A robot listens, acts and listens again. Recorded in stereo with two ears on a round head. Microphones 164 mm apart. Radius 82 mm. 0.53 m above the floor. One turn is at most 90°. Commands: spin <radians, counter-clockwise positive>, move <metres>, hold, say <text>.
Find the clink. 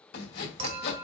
spin -0.61
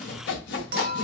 spin -1.57
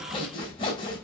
spin -0.26
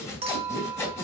spin -0.61
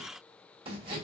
hold
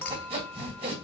spin 0.17
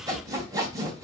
hold
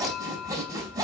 say Facing the clink, 1 to 2 m away.